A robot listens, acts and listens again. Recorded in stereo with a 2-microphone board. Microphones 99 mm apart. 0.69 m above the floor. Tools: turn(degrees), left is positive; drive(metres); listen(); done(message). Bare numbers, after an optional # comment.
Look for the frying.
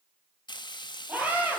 # The frying: about 50° left or 130° left.
turn(50)
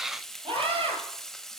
done("Facing the frying.")